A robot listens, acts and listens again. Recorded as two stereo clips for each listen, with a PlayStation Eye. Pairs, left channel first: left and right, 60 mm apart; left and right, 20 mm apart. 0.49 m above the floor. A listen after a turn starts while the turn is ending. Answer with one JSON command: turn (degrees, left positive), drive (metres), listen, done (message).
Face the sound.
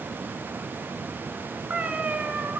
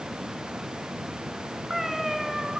{"turn": -25}
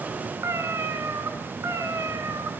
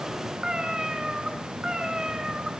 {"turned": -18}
{"turn": -125}
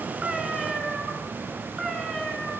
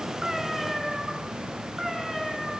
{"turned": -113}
{"done": "Found it: a cat meowing, straight ahead."}